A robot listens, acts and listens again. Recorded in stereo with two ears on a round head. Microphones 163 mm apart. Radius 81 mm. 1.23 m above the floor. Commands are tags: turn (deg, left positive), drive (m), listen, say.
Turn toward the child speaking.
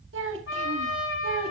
<turn deg="-90"/>
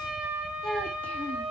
<say>Facing the child speaking.</say>